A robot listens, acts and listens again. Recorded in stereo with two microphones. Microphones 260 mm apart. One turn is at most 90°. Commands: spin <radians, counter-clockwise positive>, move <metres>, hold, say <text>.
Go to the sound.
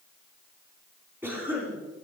spin -0.52
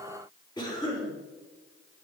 spin 0.35
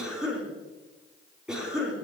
move 1.0
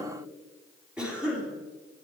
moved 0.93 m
move 1.0
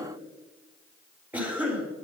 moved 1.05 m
spin -0.17
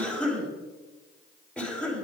move 1.0
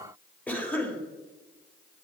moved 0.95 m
spin 0.17
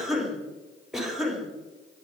move 1.0
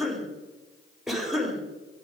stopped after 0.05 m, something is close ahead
say Arrived at the cough, straight ahead.